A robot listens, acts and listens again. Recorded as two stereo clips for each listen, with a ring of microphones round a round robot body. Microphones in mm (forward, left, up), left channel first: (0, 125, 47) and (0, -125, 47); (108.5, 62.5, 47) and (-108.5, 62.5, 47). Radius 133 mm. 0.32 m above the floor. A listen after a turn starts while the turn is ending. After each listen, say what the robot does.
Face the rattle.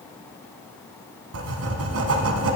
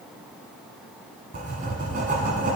Keep listening.
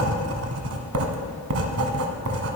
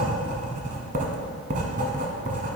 Keep listening.
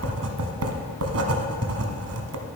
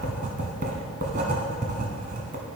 I can't make out a rattle to turn to.